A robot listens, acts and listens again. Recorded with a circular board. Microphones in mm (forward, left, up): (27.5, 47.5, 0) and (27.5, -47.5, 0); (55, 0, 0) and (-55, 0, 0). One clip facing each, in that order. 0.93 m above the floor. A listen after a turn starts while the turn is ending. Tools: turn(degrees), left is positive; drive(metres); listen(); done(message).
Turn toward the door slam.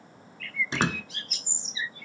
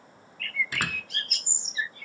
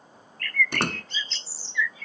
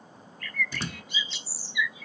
turn(degrees=25)
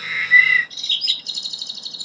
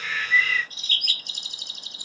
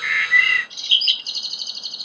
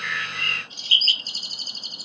done("I heard a door slam from this way, but can't make it out now.")